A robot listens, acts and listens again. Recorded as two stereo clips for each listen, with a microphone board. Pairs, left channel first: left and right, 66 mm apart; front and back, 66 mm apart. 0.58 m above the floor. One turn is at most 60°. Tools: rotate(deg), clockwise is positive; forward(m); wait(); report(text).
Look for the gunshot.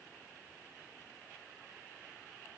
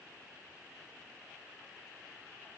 wait()
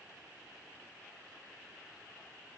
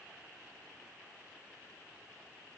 wait()
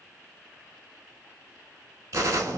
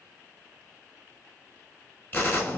rotate(55)
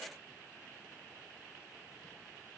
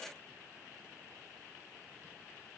report("Facing where the gunshot came from. I can't hear it now.")